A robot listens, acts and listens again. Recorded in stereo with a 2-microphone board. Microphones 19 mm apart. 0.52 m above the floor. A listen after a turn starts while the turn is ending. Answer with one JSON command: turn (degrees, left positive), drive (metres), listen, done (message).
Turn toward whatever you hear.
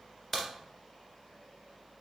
{"turn": 25}
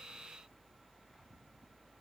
{"listen": true}
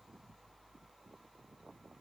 {"done": "I heard a crack, but can't make it out now. It was about straight ahead or 130° left."}